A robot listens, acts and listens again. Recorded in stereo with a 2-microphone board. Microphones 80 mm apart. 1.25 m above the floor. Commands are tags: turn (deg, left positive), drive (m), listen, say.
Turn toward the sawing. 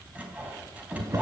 <turn deg="-20"/>
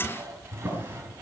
<turn deg="-140"/>
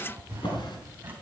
<listen/>
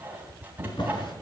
<turn deg="-25"/>
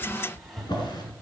<listen/>
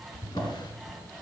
<say>Facing the sawing, 2 to 4 m away.</say>